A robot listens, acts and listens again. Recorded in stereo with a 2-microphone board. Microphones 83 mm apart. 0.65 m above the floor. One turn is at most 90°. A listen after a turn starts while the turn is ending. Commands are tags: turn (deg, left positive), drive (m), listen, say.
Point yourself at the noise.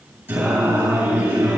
<turn deg="-25"/>
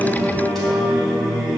<say>Facing the singing.</say>